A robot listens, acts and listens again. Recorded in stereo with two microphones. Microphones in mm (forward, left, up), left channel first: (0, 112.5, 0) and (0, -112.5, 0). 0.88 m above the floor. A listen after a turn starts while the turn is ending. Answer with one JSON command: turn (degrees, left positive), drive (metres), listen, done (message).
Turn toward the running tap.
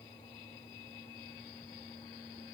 {"listen": true}
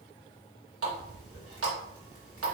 {"turn": -90}
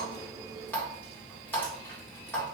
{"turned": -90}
{"turn": 10}
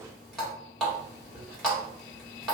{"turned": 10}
{"done": "Facing the running tap."}